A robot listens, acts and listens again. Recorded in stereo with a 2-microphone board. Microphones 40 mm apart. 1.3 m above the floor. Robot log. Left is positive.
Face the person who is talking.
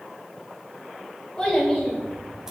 cmd yaw +30
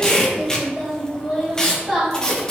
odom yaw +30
cmd yaw +30
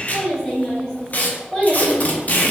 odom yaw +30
cmd yaw +30
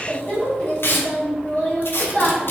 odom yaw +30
note: So it is at 140° left.
cmd yaw +140
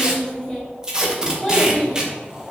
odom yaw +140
note: The child speaking is now 15° left.
cmd yaw +15
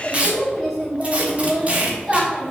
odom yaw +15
end: Found it: a child speaking, straight ahead.